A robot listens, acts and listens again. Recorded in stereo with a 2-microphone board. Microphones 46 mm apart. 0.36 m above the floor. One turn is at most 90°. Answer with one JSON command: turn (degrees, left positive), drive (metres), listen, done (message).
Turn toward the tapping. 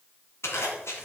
{"listen": true}
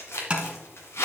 {"turn": -20}
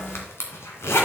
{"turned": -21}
{"listen": true}
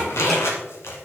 {"listen": true}
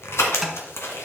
{"done": "I heard tapping, but can't make it out now. It was about straight ahead or 140° right."}